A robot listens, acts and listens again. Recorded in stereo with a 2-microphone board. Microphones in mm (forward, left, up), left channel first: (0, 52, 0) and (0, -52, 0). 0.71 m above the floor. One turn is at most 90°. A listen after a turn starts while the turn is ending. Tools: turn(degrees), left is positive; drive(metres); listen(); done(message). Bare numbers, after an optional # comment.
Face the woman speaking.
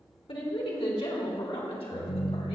turn(90)
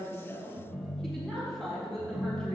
done("Found it: a woman speaking, straight ahead, over 4 m away.")